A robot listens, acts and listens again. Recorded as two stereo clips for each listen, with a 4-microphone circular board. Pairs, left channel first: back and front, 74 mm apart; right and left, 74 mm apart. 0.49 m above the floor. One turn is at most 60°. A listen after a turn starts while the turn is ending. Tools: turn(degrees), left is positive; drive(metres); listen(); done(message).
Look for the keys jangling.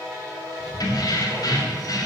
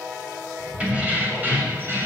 turn(degrees=60)
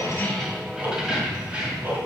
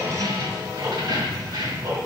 turn(degrees=60)
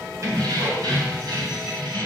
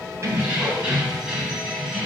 done("Facing the keys jangling, 2 to 4 m away.")